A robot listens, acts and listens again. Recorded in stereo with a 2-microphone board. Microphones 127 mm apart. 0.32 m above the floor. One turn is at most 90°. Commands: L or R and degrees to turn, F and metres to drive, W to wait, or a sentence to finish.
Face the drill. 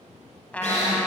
L60
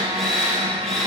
Facing the drill.